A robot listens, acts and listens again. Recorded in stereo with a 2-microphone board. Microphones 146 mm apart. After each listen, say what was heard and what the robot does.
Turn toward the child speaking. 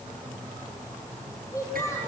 The child speaking: about 20° left or 160° left. Turn 20° left.
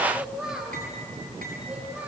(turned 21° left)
So it is at 10° right. Turn 10° right.
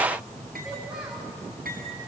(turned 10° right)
Keep listening.
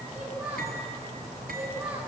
The child speaking is now 10° right. Turn 10° right.
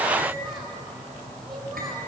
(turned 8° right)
Keep listening.
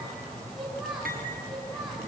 Facing the child speaking, over 4 m away.